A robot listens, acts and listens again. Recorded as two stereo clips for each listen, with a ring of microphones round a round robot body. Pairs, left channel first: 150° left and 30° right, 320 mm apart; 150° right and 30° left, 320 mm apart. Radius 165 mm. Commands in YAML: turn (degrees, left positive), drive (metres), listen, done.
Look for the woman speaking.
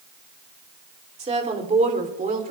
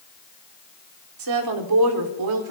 turn: 35
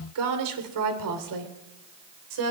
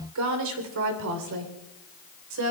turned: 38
turn: -10
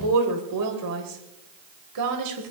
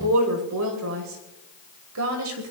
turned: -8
done: "Facing the woman speaking."